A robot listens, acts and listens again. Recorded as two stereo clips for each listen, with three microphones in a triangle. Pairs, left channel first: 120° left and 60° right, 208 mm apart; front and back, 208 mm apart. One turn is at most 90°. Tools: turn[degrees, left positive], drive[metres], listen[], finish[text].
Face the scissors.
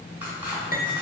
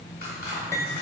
Action: listen[]
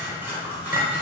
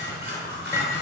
Thought: The scissors: 140° right.
Action: turn[-90]
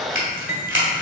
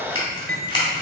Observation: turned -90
Thought: The scissors is now 65° right.
Action: turn[-65]
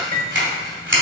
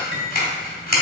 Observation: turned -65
Thought: The scissors is now 40° right.
Action: turn[-40]
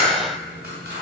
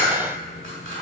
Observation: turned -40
Action: listen[]
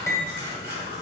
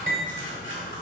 Action: listen[]
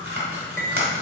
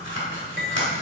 Thought: The scissors is now 20° right.
Action: turn[-20]
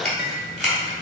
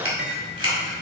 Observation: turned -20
Action: finish[Found it: scissors, straight ahead.]